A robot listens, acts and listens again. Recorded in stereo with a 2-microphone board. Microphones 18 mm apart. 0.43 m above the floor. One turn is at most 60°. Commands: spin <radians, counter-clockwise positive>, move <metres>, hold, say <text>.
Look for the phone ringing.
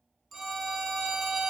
spin 0.52
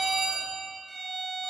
spin -0.35
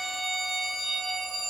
spin -0.17
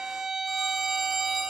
say Facing the phone ringing.